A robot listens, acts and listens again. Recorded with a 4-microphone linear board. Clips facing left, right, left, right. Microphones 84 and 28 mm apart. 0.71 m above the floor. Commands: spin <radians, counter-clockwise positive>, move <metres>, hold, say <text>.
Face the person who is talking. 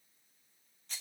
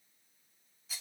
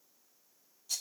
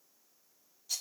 hold
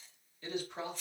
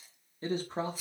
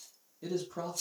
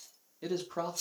spin -0.61
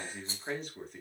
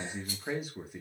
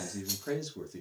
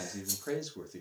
spin -0.17
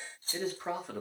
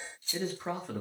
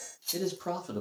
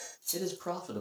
say Facing the man speaking.